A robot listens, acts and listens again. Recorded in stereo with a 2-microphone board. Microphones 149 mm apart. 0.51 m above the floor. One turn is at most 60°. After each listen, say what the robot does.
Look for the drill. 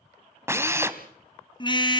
Turn 20° right.
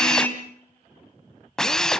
Found it: a drill, straight ahead.